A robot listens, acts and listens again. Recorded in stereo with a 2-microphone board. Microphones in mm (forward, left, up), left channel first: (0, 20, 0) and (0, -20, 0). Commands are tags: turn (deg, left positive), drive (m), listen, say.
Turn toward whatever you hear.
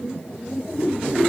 <listen/>
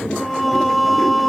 <turn deg="30"/>
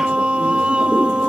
<turn deg="-30"/>
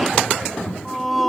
<say>Facing the singing.</say>